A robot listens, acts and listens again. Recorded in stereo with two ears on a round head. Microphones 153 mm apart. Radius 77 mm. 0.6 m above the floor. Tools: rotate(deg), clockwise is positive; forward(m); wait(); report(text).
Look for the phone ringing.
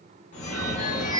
rotate(-45)
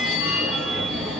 report("Found it: a phone ringing, straight ahead, 1 to 2 m away.")